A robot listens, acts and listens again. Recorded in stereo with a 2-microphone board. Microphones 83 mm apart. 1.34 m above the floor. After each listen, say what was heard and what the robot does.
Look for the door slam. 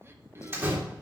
The door slam: about 25° right or 155° right. Turn 25° right.
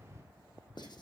Keep listening.
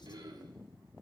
I heard a door slam, but can't make it out now. It was about straight ahead or 130° right.